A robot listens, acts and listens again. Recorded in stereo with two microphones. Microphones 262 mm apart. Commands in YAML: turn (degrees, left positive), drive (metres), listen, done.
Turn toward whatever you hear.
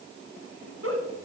turn: -60
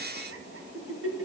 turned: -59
turn: -60
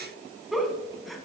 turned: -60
done: "Found it: a giggle, straight ahead."